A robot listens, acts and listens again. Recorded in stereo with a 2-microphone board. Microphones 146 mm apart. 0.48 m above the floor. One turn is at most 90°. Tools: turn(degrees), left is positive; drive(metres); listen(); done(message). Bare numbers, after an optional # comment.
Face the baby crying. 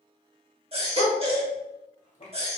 # The baby crying: about 40° right or 140° right.
turn(-40)
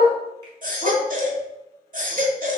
# So it is at 95° right.
turn(-90)
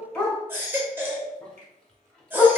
# The baby crying is now 15° right.
turn(-15)
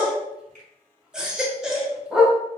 done("Facing the baby crying.")